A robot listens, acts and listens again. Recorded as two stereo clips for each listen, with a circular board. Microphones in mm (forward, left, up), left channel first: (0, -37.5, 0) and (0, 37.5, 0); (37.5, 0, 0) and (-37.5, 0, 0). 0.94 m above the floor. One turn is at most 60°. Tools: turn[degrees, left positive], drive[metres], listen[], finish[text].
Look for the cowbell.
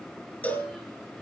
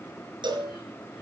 Thought: The cowbell: 165° right.
Action: turn[-60]
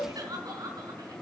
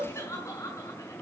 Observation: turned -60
Thought: The cowbell is now 105° right.
Action: turn[-60]
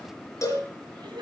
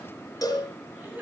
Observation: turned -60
Thought: The cowbell is now 40° right.
Action: turn[-40]
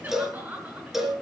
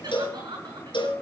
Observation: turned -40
Action: finish[Found it: a cowbell, straight ahead.]